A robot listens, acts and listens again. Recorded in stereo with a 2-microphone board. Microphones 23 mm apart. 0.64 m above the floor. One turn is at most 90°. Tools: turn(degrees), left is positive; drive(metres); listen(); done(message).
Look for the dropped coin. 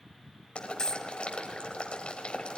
turn(degrees=35)
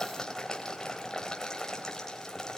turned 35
listen()
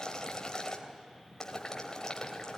done("I heard a dropped coin, but can't make it out now. It was about straight ahead or 110° left.")